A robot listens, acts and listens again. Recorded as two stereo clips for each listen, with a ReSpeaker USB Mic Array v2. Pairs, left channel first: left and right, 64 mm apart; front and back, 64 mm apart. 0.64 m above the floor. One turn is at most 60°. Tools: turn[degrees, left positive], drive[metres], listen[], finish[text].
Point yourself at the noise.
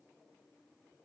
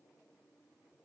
Action: listen[]
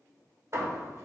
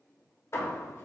Thought: The hammering: 45° right.
Action: turn[-45]
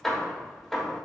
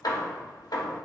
Action: finish[Facing the hammering.]